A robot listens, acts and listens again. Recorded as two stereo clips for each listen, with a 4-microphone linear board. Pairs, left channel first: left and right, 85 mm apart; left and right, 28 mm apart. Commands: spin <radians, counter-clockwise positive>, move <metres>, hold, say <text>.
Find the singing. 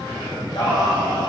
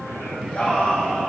spin 0.96
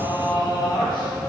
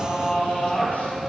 spin 1.13
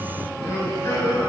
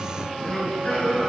spin 0.61
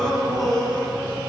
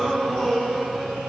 say Found it: singing, straight ahead.